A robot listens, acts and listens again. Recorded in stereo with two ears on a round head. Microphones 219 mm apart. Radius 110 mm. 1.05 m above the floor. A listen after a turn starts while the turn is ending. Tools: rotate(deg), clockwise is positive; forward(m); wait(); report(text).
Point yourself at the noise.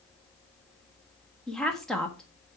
rotate(-30)
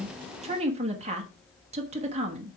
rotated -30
rotate(25)
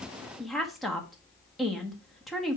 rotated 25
report("Found it: a woman speaking, straight ahead.")